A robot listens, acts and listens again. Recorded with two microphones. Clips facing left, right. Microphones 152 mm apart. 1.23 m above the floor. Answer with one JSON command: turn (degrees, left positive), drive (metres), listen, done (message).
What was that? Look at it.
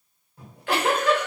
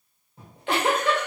{"turn": -25}
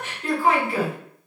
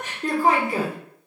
{"turn": -135}
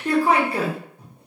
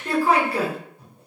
{"turn": 20}
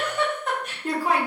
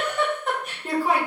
{"done": "Facing the giggle."}